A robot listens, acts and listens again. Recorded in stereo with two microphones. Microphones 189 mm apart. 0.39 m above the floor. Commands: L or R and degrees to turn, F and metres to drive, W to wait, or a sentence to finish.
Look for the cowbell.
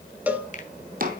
R30
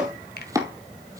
W
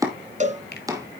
R140
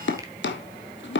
W
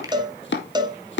R20
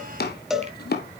Found it: a cowbell, straight ahead.